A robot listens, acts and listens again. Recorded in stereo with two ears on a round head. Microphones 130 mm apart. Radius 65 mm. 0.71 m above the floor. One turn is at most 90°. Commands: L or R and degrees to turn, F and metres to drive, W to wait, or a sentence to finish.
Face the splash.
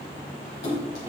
L90
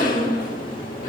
Facing where the splash came from. I can't hear it now.